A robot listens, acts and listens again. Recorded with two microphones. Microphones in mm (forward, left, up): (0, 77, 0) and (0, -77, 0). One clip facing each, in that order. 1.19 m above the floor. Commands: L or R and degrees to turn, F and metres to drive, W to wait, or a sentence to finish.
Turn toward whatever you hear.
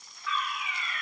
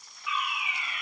R30
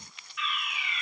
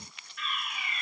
R135
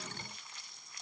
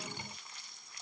W
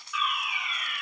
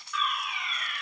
Found it: a fire alarm, straight ahead, over 4 m away.